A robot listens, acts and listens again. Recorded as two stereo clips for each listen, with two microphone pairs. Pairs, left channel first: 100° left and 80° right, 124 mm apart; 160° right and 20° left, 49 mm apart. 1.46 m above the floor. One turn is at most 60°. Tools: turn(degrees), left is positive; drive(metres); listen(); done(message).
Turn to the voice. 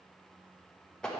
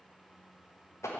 listen()
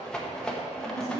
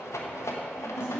turn(degrees=-50)
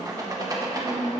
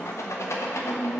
turn(degrees=-30)
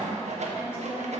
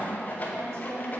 listen()
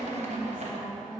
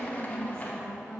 done("Facing the woman speaking, over 4 m away.")